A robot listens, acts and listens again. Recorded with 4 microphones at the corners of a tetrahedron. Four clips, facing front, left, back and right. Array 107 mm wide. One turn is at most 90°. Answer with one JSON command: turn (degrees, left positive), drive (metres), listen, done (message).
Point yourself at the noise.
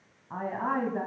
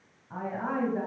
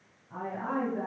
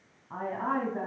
{"turn": -20}
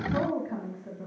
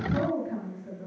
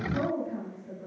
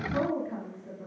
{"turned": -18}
{"turn": -15}
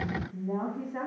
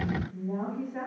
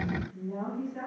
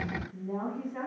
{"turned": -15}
{"turn": -10}
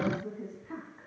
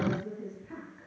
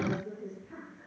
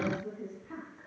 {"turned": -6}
{"turn": -10}
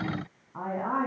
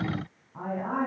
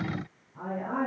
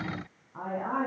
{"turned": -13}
{"turn": -10}
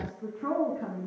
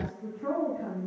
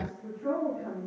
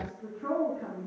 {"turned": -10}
{"done": "Facing the woman speaking, 2 to 4 m away."}